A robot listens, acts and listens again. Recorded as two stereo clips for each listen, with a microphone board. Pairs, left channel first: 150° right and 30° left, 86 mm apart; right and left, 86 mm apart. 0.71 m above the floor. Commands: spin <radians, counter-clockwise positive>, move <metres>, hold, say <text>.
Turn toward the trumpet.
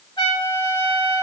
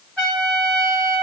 spin -2.97
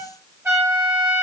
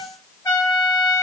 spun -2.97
spin -0.52
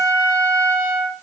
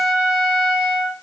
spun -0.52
say Facing the trumpet, 1 to 2 m away.